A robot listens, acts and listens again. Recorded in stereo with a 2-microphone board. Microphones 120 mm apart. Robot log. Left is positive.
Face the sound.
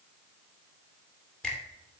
cmd yaw +30
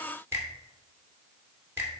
note: So it is at 20° right.
cmd yaw -20
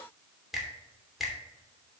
end: Found it: a finger snap, straight ahead, 2 to 4 m away.